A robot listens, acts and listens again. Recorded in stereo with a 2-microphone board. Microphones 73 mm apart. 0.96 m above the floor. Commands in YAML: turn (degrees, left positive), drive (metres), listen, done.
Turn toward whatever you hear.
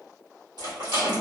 turn: -75
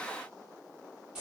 turn: -10
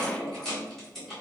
done: "Found it: a rattle, straight ahead, 2 to 4 m away."